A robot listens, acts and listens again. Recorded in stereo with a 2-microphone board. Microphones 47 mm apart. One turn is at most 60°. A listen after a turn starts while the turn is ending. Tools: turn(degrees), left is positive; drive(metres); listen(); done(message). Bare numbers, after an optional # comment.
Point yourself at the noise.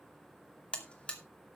# The buzzer: about 25° left or 155° left.
turn(25)
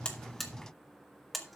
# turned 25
done("Facing the buzzer.")